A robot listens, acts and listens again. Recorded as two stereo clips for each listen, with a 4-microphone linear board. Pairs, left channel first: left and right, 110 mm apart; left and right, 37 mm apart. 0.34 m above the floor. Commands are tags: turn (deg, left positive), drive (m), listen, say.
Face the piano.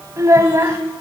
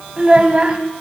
<listen/>
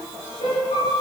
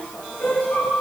<turn deg="90"/>
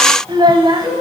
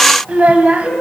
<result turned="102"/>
<turn deg="-15"/>
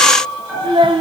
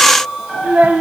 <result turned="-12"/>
<say>Found it: a piano, straight ahead.</say>